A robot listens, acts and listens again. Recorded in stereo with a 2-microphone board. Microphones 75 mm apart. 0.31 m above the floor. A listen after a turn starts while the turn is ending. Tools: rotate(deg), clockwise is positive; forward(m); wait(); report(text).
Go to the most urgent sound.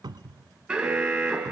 rotate(30)
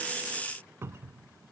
wait()
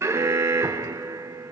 rotate(130)
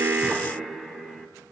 forward(1.0)
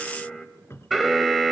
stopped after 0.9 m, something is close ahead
report("I am next to the alarm.")